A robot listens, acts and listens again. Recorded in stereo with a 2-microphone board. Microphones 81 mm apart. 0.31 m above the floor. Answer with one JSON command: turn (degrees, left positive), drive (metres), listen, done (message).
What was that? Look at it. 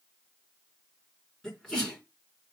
{"turn": 30}
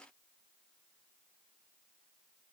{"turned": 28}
{"listen": true}
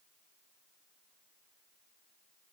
{"done": "I heard a sneeze, but can't make it out now. It was about 20° right or 145° left."}